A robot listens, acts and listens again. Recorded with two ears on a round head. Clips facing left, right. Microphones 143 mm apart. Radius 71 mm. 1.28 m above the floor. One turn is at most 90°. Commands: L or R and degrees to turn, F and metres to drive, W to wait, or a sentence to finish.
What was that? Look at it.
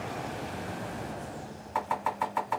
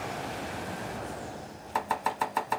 R45
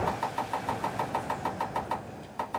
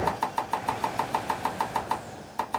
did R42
R80
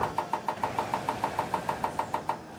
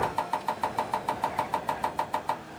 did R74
Found it: chopping, straight ahead.